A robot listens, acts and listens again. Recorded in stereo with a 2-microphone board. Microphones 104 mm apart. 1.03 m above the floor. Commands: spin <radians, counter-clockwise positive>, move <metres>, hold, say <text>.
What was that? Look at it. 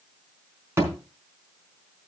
spin -0.44
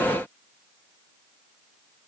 hold
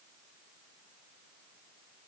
say I heard a thud, but can't make it out now. It was about straight ahead or 130° right.